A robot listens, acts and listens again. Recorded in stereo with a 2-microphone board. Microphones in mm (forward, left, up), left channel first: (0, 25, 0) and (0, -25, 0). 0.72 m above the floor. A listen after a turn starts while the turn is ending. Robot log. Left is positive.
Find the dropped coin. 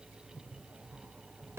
cmd idle
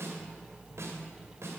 cmd idle
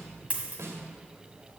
note: The dropped coin: about 25° right or 155° right.
cmd yaw -25
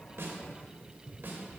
cmd idle
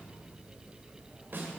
end: I heard a dropped coin, but can't make it out now. It was about straight ahead or 130° right.